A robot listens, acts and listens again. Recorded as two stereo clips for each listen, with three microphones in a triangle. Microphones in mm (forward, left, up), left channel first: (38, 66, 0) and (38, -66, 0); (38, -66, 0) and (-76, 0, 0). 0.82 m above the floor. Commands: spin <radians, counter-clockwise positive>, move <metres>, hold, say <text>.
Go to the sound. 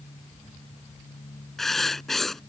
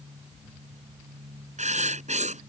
spin 3.14
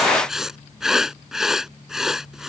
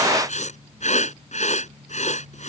move 1.0
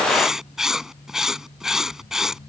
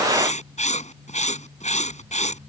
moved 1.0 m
move 1.0
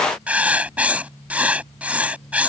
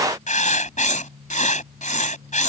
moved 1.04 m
spin -0.17
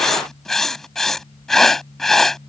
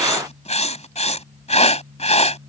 move 1.0
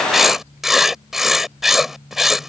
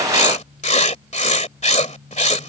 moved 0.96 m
move 1.0
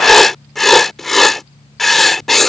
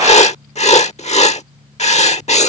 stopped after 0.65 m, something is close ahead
say Arrived at the writing, straight ahead.